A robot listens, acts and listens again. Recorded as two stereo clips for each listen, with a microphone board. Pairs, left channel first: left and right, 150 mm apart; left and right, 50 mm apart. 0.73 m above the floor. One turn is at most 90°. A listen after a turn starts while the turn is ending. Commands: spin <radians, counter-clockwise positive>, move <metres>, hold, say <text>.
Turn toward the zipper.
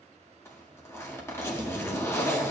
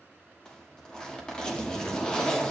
spin 0.35
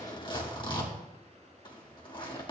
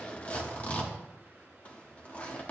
spin 1.57
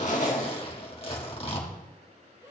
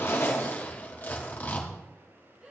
spin 0.87
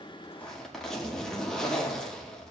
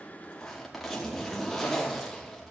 say Found it: a zipper, straight ahead, 1 to 2 m away.